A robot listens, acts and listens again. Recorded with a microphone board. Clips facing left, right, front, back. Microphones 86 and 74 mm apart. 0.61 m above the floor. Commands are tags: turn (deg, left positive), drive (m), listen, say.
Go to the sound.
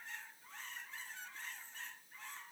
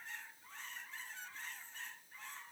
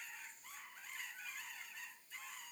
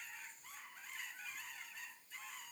<listen/>
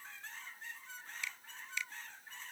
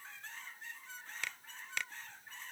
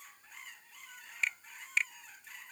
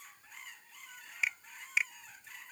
<turn deg="-100"/>
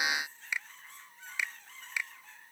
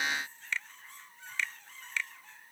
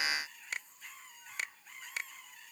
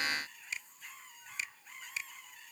<turn deg="15"/>
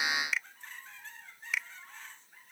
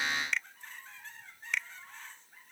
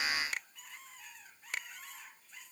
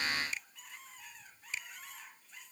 <drive m="1.0"/>
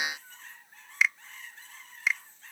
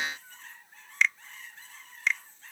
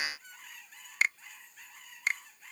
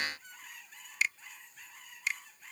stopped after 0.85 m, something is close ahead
<turn deg="10"/>
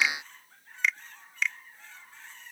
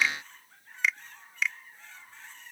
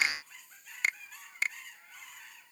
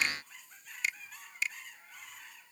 <say>I am next to the finger snap.</say>